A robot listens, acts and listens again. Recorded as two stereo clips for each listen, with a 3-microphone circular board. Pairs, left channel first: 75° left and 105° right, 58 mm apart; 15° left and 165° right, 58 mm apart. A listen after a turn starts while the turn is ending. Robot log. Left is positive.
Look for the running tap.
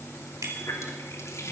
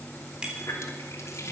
note: The running tap: 50° left.
cmd yaw +50
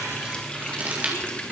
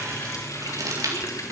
end: Facing the running tap, 2 to 4 m away.